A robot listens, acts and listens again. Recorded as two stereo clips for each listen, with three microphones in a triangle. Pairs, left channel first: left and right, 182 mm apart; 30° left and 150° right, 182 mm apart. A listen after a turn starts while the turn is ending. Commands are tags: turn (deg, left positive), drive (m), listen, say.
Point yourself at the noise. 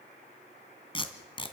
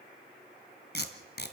<turn deg="30"/>
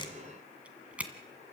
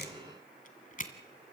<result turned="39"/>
<turn deg="-10"/>
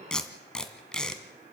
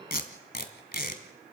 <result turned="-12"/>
<say>Facing the tape being pulled.</say>